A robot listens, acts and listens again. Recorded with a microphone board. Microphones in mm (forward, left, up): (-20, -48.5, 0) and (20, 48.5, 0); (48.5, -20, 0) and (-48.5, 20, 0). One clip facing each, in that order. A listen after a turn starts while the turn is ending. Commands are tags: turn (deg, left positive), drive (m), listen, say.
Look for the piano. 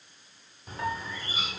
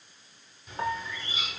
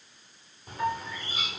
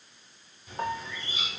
<turn deg="120"/>
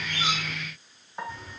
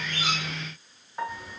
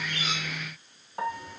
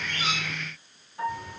<turn deg="-25"/>
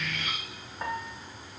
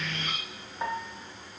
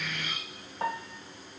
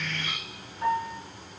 <turn deg="-15"/>
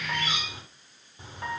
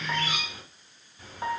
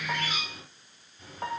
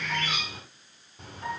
<say>Found it: a piano, straight ahead, 1 to 2 m away.</say>